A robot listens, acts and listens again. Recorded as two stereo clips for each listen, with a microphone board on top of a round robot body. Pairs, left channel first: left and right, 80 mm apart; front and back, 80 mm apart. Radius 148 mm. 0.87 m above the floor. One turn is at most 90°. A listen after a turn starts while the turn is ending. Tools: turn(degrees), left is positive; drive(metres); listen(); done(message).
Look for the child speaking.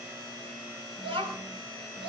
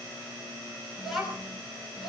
turn(degrees=-90)
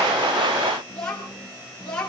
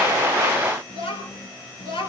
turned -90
turn(degrees=10)
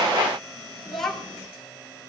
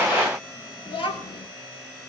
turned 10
done("Facing the child speaking.")